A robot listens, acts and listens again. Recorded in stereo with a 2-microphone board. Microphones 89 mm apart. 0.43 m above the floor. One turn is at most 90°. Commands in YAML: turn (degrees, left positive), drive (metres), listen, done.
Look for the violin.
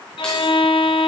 turn: 90
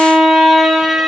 done: "Found it: a violin, straight ahead, under 1 m away."